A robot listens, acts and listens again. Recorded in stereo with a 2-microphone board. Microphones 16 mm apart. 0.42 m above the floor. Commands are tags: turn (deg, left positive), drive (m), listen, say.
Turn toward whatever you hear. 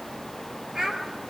<turn deg="-45"/>
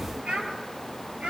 <turn deg="-100"/>
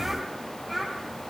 <say>Facing the child speaking.</say>